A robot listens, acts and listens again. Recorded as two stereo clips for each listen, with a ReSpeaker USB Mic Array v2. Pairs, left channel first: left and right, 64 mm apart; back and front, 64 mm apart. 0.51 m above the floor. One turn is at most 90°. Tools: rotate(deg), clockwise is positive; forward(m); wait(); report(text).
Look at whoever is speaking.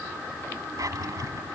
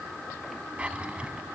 wait()
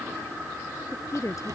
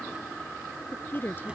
rotate(-90)
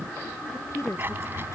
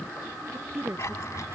rotate(-50)
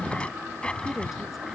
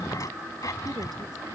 wait()
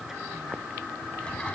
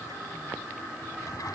wait()
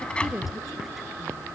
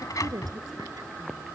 report("Facing where the woman speaking came from. I can't hear it now.")